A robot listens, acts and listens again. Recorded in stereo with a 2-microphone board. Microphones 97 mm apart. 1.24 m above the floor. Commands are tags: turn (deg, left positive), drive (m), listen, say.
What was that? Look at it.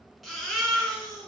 <turn deg="30"/>
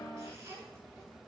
<listen/>
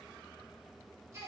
<listen/>
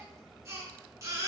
<turn deg="-30"/>
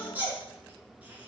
<turn deg="-20"/>
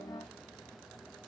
<listen/>
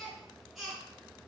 <say>Found it: a baby crying, straight ahead.</say>